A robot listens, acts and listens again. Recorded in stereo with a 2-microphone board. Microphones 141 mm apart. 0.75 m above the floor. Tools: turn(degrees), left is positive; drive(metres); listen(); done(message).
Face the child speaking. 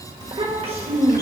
turn(degrees=-45)
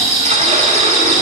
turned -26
listen()
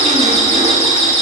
listen()
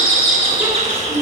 turn(degrees=-15)
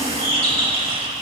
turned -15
listen()
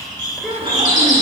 done("Facing the child speaking.")